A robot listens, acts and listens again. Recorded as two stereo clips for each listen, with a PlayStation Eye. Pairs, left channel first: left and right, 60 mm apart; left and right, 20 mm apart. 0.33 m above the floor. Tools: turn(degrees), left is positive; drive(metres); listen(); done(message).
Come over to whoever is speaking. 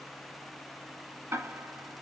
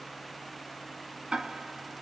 listen()
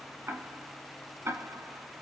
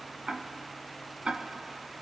listen()
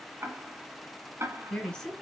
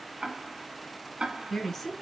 turn(degrees=30)
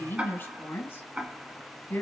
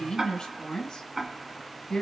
turn(degrees=135)
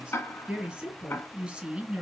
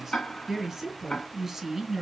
turn(degrees=-20)
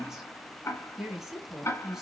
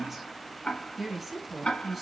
turn(degrees=-10)
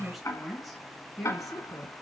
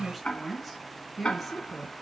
drive(metres=1.0)
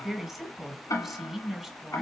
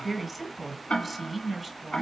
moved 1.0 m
turn(degrees=-10)
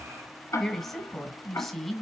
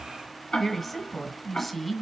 drive(metres=1.0)
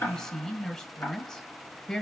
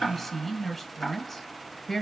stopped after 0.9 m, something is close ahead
done("Arrived at the woman speaking, straight ahead.")